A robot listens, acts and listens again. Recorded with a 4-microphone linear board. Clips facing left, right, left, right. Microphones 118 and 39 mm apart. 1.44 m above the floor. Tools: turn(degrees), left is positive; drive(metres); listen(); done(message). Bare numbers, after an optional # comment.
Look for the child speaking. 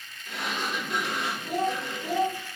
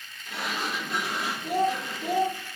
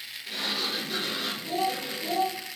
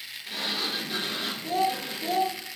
# The child speaking: about 70° right or 110° right.
turn(-70)
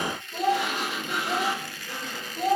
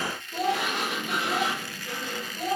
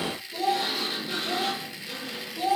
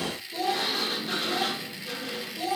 # So it is at 30° left.
turn(30)
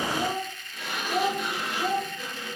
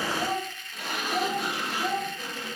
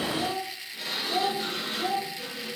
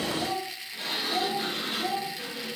# The child speaking is now 15° left.
turn(15)
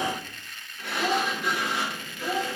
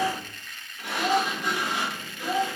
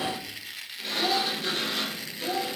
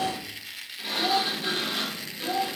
done("Facing the child speaking.")